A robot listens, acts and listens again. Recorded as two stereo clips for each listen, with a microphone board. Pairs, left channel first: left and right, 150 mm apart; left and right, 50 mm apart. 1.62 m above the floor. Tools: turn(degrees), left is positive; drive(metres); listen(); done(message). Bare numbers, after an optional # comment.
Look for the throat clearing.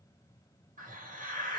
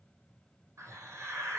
listen()
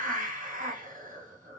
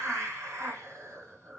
listen()
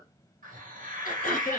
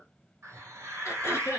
# The throat clearing: about 75° left or 105° left.
turn(75)
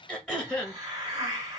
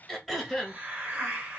done("Facing the throat clearing.")